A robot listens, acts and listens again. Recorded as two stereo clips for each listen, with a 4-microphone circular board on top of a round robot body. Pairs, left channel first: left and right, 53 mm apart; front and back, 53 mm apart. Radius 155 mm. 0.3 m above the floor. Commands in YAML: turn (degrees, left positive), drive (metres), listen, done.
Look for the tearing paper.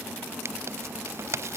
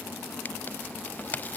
turn: -55
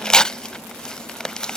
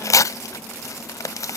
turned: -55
turn: 10
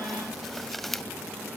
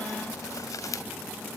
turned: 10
done: "Found it: tearing paper, straight ahead."